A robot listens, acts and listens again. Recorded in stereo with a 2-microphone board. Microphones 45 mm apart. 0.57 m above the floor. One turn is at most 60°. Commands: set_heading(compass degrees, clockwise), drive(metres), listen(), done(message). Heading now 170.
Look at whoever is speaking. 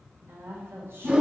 set_heading(230)
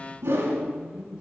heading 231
set_heading(256)
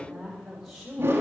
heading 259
done("Found it: a woman speaking, straight ahead.")